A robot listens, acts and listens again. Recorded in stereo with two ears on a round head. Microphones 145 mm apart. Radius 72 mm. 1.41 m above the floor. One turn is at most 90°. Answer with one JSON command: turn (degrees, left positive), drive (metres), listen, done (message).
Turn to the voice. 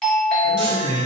{"turn": -90}
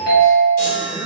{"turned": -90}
{"listen": true}
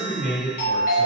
{"done": "Facing the man speaking, 1 to 2 m away."}